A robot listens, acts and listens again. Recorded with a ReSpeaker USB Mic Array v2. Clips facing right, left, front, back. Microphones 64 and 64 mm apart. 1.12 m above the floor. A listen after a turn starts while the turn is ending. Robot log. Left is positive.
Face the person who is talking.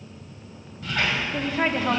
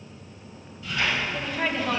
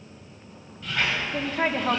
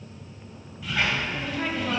note: The woman speaking: 35° right.
cmd yaw -35
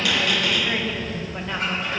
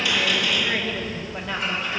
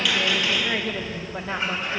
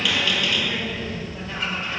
end: Found it: a woman speaking, straight ahead.